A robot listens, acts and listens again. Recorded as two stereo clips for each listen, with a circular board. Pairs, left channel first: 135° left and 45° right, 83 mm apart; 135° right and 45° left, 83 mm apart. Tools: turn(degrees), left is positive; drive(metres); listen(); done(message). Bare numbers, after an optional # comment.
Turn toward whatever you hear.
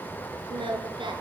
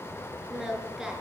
# The singing: 40° right.
turn(-40)
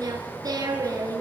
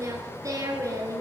done("Found it: singing, straight ahead.")